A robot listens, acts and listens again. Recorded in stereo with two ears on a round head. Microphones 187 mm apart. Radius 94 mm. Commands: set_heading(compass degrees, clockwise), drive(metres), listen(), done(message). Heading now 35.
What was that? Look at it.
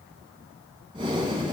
set_heading(60)
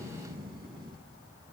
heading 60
set_heading(195)
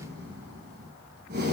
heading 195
set_heading(245)
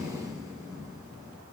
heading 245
set_heading(260)
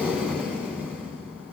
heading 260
done("Facing the breathing.")